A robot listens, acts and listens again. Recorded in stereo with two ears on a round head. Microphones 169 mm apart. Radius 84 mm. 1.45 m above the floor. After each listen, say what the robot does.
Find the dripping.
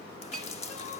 Turn 35° left.
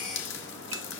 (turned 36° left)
Turn 105° left.
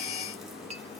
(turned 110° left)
Keep listening.
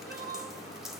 Found it: dripping, straight ahead, 2 to 4 m away.